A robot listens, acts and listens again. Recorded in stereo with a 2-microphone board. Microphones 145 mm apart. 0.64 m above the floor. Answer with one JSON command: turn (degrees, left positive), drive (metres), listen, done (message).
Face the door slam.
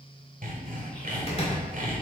{"turn": 40}
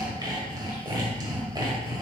{"listen": true}
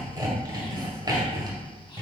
{"done": "I heard a door slam, but can't make it out now. It was about straight ahead or 100° left."}